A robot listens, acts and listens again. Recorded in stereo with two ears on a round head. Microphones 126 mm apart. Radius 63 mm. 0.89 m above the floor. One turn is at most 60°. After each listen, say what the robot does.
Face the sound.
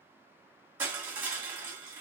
Turn 30° right.
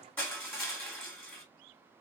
Turn 15° left.
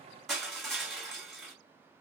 Facing the crushing.